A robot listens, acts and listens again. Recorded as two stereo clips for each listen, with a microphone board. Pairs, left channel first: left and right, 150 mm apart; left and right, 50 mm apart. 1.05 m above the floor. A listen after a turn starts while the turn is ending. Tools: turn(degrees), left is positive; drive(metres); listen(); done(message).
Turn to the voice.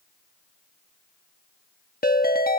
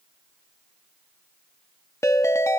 listen()
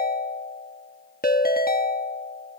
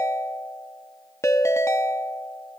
listen()
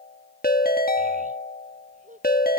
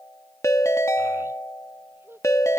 turn(degrees=-60)
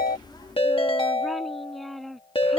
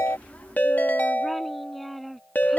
done("Found it: a child speaking, straight ahead.")